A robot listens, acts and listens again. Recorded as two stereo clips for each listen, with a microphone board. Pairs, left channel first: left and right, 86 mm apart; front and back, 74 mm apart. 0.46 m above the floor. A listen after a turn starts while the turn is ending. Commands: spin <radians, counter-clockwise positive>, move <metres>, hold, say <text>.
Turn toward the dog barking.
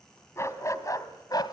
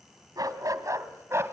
spin 2.18
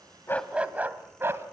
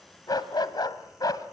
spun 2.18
spin -0.52
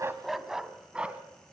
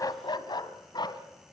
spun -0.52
spin -0.26
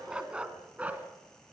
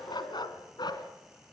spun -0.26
spin -0.26
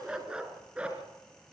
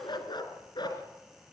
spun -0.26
spin -0.17
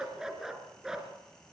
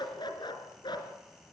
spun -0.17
say Facing the dog barking.